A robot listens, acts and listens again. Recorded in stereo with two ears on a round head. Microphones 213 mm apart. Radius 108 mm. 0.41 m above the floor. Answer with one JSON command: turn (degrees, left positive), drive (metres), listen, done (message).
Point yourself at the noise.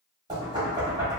{"turn": -20}
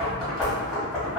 {"done": "Facing the knocking."}